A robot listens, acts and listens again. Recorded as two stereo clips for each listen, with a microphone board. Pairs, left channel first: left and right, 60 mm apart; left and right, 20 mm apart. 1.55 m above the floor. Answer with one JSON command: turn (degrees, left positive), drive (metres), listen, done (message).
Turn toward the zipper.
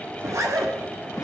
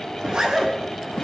{"turn": -55}
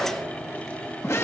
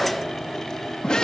{"listen": true}
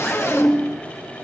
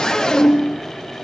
{"listen": true}
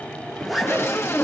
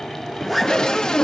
{"done": "Facing the zipper, over 4 m away."}